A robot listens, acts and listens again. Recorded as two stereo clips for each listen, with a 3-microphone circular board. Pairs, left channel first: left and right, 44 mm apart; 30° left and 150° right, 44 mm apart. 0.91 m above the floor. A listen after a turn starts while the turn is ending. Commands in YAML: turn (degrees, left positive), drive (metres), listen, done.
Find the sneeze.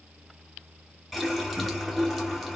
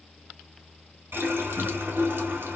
listen: true
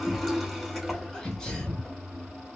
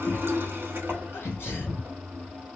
turn: 15
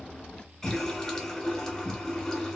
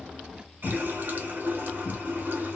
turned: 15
done: "Facing where the sneeze came from. I can't hear it now."